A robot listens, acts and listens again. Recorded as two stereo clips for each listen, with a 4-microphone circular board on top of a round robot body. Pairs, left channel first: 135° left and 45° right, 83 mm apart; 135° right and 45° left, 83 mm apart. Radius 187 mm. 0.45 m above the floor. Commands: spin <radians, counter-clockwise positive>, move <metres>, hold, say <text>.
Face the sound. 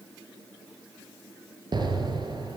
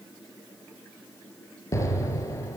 spin -1.40
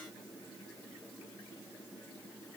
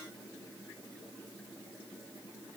say I heard an explosion from this way, but can't make it out now.